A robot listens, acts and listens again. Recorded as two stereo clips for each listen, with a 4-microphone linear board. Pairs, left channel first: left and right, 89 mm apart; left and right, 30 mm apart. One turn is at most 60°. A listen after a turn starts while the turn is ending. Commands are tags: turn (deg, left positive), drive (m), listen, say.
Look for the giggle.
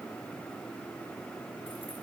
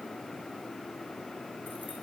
<listen/>
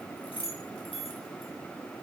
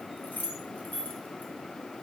<listen/>
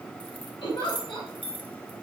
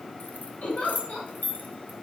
<turn deg="60"/>
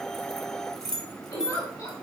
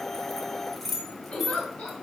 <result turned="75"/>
<turn deg="45"/>
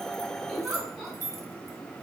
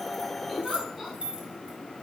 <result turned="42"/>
<say>Facing the giggle, 2 to 4 m away.</say>